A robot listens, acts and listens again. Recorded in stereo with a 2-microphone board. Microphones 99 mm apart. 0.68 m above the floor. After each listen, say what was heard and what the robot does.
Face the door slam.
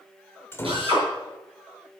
The door slam: about 25° left or 155° left. Turn 25° left.
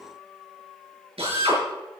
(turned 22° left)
Keep listening.
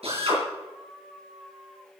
I heard a door slam, but can't make it out now. It was about straight ahead or 135° left.